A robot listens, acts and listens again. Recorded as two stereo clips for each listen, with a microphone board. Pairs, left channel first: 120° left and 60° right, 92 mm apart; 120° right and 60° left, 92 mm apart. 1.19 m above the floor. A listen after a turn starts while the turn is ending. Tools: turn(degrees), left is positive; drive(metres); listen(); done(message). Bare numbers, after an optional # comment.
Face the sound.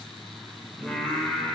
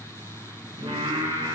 # The singing: 35° left.
turn(35)
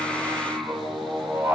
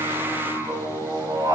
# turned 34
# The singing is now 10° left.
turn(10)
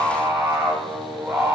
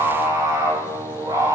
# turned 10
# The singing is now 10° left.
turn(10)
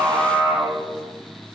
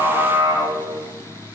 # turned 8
# The singing is now 10° left.
turn(10)
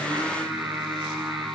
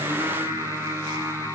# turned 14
done("Found it: singing, straight ahead.")